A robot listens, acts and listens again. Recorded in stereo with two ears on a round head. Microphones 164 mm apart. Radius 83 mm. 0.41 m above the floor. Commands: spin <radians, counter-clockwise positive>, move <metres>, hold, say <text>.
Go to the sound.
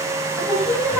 spin 0.52
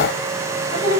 spin 2.44
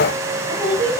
spin -0.17
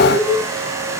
move 1.0
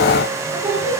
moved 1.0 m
move 1.0
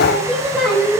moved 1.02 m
move 1.0
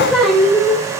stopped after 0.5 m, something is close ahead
say I am next to the singing.